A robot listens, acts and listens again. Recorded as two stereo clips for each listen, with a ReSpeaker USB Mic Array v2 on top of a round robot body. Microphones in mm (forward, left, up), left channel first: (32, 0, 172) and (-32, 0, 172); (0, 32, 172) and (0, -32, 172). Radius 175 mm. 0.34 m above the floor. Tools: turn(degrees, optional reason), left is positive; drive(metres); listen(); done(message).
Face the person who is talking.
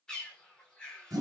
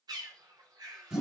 listen()
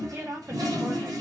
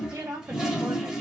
turn(degrees=-130, reason="The woman speaking: 130° right.")
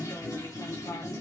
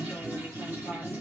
listen()
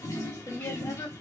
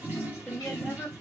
turn(degrees=10, reason="The woman speaking is now 10° left.")
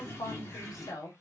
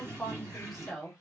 done("Facing the woman speaking.")